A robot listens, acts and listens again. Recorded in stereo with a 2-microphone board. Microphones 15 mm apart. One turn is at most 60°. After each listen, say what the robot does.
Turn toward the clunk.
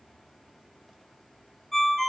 Keep listening.
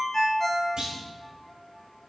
Turn 60° right.
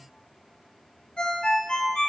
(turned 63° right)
Keep listening.
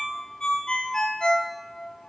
I heard a clunk, but can't make it out now. It was about 10° right or 45° right.